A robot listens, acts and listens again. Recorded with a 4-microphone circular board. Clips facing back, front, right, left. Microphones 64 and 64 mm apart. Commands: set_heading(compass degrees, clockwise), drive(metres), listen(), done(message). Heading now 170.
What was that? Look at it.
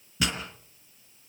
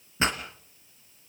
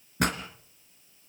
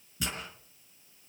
set_heading(225)
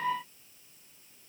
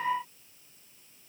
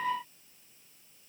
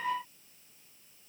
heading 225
done("Facing where the pop came from. I can't hear it now.")